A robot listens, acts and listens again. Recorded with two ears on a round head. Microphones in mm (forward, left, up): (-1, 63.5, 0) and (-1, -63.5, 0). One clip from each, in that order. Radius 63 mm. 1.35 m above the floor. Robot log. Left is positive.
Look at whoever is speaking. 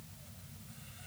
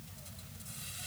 cmd idle
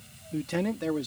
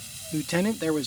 note: The man speaking: about 30° right or 150° right.
cmd yaw -30
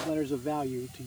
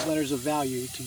note: So it is at 115° right.
cmd yaw -115
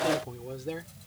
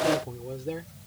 note: The man speaking is now 25° left.
cmd yaw +25
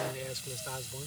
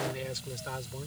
end: Found it: a man speaking, straight ahead.